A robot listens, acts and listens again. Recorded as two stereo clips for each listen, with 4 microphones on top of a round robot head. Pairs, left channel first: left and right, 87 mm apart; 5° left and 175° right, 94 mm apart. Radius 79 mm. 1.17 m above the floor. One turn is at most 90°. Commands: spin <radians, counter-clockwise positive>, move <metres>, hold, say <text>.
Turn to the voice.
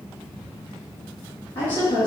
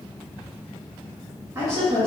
spin 1.57
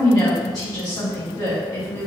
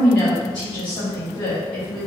spin 0.44
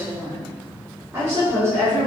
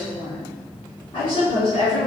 spin -0.70
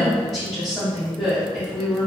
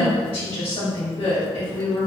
say Found it: a woman speaking, straight ahead, 1 to 2 m away.